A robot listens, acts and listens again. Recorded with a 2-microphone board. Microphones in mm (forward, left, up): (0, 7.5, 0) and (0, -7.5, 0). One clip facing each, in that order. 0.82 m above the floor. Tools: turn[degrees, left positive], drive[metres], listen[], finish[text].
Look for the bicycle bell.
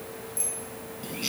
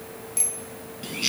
Thought: The bicycle bell: about 55° right or 125° right.
Action: turn[-55]
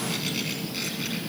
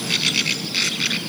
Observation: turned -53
Action: listen[]
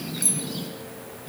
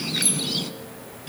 Action: listen[]
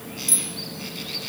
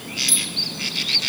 Action: finish[I heard a bicycle bell, but can't make it out now. It was about straight ahead or 75° right.]